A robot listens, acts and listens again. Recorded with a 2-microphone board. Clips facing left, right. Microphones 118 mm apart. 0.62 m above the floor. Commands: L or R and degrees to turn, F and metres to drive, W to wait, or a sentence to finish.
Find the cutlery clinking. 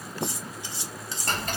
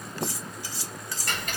L20
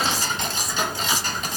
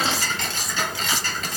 W
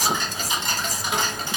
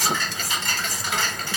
W
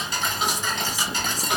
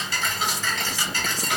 I heard cutlery clinking, but can't make it out now. It was about straight ahead or 140° left.